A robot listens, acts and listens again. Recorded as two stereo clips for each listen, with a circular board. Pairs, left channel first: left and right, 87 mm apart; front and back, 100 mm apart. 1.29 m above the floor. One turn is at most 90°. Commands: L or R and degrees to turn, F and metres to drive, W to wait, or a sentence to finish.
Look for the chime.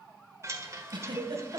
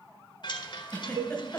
R35
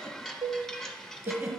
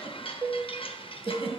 Found it: a chime, straight ahead.